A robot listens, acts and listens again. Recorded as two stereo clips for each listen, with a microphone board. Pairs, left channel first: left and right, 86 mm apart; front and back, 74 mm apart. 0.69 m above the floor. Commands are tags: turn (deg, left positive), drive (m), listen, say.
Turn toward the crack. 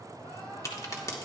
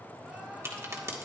<turn deg="135"/>
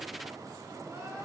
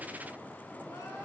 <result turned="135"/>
<say>I heard a crack from this way, but can't make it out now.</say>